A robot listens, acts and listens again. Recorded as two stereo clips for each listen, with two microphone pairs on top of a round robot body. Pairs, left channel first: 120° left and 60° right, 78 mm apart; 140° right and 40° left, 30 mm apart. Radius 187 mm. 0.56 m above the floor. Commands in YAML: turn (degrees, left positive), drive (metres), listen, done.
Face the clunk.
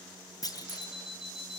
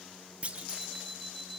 turn: 90
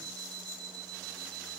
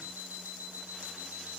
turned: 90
done: "Facing where the clunk came from. I can't hear it now."